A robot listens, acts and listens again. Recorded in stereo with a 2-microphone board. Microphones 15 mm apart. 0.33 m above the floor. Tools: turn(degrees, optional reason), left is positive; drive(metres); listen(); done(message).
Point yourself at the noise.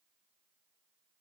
listen()
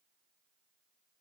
listen()
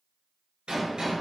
turn(degrees=-90)
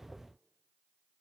done("I heard a gunshot from this way, but can't make it out now.")